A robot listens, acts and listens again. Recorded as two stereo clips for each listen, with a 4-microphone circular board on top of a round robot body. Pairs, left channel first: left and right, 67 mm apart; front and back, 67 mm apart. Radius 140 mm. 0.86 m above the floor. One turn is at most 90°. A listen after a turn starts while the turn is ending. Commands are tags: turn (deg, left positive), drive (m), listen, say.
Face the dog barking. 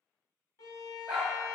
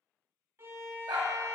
<turn deg="-90"/>
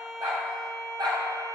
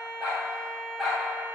<turn deg="-90"/>
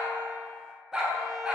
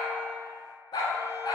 <turn deg="-15"/>
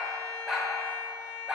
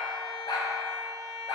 <turn deg="-10"/>
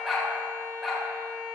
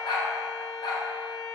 <say>Facing the dog barking, 1 to 2 m away.</say>